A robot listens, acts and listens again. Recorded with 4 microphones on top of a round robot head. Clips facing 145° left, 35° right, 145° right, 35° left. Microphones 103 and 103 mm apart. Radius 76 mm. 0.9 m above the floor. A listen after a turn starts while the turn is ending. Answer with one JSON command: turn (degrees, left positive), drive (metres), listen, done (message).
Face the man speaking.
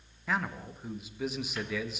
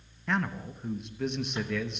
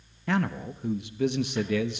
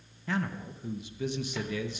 {"turn": -130}
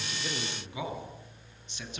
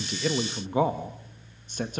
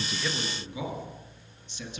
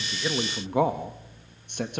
{"done": "Facing the man speaking, 1 to 2 m away."}